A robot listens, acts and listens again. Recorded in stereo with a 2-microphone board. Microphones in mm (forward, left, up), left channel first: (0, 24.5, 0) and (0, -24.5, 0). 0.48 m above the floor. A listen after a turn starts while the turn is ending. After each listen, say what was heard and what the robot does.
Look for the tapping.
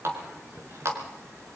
Keep listening.
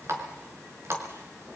Keep listening.
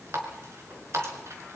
I can't make out tapping, only a running tap.